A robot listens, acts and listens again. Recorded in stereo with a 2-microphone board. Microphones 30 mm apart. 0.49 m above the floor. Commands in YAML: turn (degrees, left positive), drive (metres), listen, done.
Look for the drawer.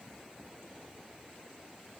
listen: true
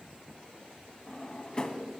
turn: 25
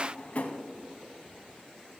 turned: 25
turn: 130
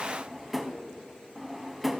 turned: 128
done: "Facing the drawer, under 1 m away."